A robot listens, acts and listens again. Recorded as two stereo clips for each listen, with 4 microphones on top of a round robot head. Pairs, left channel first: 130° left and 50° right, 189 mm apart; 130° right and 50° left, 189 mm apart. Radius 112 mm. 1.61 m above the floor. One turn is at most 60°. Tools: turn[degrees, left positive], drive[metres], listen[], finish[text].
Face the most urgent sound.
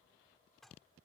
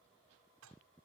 Action: listen[]
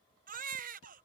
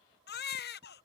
Thought: The baby crying: 95° right.
Action: turn[-60]
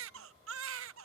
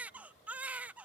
Thought: The baby crying is now 35° right.
Action: turn[-35]
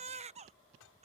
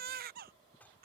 Action: finish[Found it: a baby crying, straight ahead.]